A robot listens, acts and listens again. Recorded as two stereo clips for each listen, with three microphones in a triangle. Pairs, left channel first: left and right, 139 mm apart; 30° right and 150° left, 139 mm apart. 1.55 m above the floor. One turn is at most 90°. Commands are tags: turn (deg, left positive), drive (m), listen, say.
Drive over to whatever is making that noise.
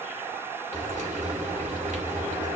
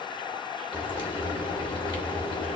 <turn deg="-80"/>
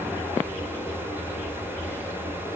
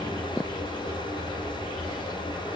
<turn deg="15"/>
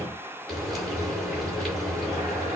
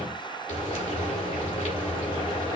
<drive m="1.0"/>
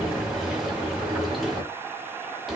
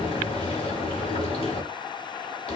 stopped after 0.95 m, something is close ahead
<say>Arrived at the frying, straight ahead.</say>